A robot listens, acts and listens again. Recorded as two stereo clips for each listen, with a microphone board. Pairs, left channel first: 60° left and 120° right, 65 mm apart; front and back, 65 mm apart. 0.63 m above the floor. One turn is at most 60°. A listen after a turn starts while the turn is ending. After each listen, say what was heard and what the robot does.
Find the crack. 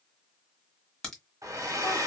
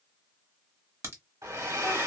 The crack: 140° left. Turn 60° left.
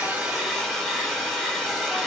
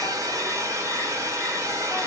Nothing new. It was at 80° left. Turn 60° left.
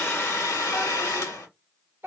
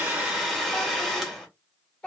Nothing new. It was at 20° left. Turn 20° left.
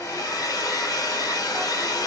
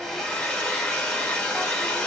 Facing where the crack came from. I can't hear it now.